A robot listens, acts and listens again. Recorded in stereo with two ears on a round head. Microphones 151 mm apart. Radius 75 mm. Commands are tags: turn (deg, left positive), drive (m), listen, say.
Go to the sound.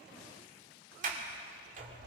<turn deg="-50"/>
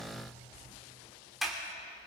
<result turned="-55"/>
<drive m="1.0"/>
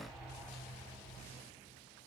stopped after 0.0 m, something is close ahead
<say>Something is in my way. I am facing the sliding door but have not reached it.</say>